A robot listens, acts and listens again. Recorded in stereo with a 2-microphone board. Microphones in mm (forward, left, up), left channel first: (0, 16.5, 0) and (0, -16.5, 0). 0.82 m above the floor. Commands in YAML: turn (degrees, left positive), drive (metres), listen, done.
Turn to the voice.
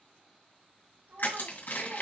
turn: -90
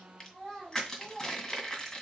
done: "Facing the child speaking."